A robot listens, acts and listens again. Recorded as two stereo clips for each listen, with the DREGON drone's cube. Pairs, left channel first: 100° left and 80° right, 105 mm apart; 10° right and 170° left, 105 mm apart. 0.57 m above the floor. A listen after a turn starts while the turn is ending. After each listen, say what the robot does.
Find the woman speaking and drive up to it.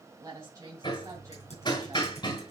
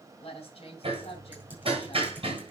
Turn 20° right.
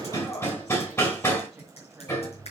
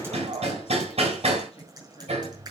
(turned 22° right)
Keep listening.
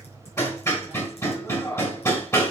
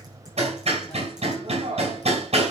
Keep listening.
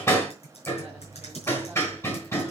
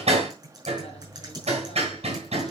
Facing where the woman speaking came from. I can't hear it now. I did not reach it.